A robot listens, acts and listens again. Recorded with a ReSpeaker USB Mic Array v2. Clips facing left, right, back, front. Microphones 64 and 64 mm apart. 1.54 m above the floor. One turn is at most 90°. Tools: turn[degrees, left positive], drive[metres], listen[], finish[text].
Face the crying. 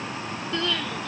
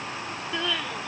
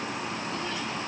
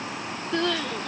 Thought: The crying: 10° right.
Action: turn[-10]
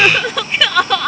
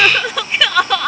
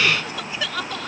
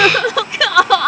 Action: finish[Facing the crying.]